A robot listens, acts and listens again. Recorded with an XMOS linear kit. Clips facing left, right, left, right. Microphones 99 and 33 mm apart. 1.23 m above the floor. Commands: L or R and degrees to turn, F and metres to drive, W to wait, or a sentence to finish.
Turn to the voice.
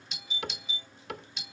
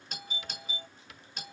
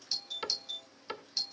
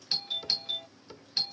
W
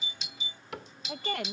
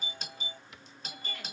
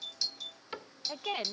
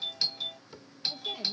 L65
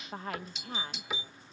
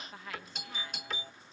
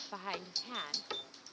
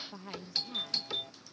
L45
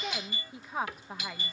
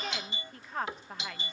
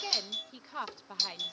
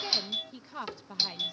L10
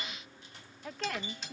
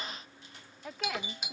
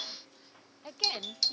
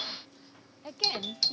Found it: a woman speaking, straight ahead.